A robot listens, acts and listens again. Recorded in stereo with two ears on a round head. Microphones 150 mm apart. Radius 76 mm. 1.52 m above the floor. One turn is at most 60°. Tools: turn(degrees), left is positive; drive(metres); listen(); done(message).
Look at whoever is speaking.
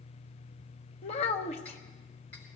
turn(degrees=40)
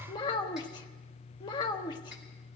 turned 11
turn(degrees=25)
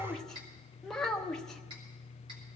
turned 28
done("Found it: a child speaking, straight ahead, 1 to 2 m away.")